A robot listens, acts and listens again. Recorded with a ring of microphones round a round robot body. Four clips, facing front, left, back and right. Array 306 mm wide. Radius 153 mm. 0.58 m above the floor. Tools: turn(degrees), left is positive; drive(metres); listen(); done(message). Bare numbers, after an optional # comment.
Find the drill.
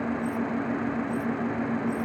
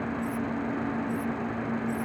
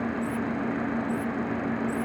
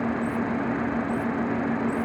listen()
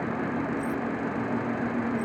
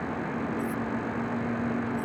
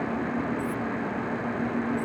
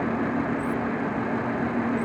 listen()
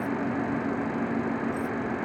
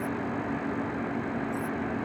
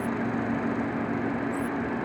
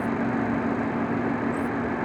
done("I can't make out a drill to turn to.")